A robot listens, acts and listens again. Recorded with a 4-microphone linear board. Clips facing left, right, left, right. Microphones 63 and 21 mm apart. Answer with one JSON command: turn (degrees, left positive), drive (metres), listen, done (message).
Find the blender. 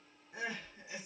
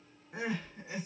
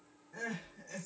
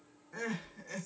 {"listen": true}
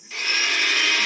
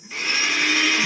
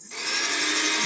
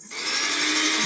{"turn": -30}
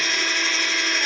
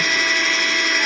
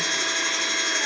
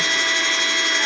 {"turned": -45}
{"turn": -125}
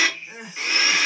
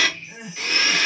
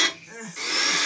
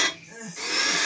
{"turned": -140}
{"turn": 15}
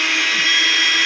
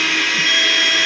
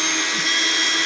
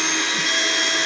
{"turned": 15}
{"done": "Facing the blender, under 1 m away."}